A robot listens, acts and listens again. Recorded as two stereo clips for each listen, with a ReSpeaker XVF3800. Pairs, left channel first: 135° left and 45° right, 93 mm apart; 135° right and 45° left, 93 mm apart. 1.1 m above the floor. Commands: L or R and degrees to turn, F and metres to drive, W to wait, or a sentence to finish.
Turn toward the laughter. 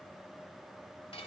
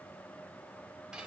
W
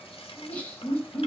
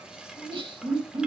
L60
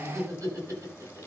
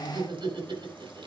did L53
L10
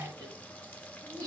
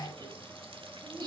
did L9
Found it: laughter, straight ahead, over 4 m away.